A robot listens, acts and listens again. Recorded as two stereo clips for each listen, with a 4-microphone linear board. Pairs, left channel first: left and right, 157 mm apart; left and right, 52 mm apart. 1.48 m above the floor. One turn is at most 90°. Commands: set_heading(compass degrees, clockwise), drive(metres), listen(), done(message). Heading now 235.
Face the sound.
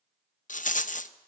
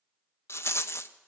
set_heading(180)
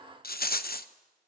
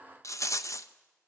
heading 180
set_heading(105)
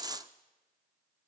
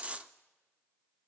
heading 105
set_heading(130)
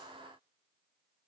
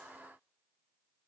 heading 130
listen()
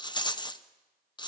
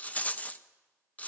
set_heading(100)
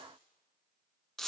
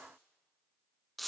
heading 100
done("Facing the rattle.")